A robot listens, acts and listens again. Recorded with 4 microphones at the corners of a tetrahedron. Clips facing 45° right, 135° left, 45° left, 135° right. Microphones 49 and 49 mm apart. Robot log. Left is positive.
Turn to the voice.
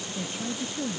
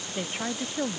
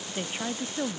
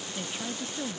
note: The woman speaking: 100° left.
cmd yaw +100
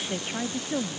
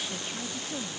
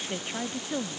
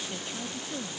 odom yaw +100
end: Found it: a woman speaking, straight ahead.